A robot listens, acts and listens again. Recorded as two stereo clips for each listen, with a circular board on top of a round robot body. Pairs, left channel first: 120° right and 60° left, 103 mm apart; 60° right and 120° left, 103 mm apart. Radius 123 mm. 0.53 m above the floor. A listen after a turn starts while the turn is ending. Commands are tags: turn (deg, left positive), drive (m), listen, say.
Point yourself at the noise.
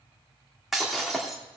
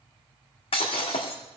<turn deg="-30"/>
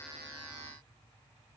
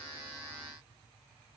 <say>I heard breaking glass from this way, but can't make it out now.</say>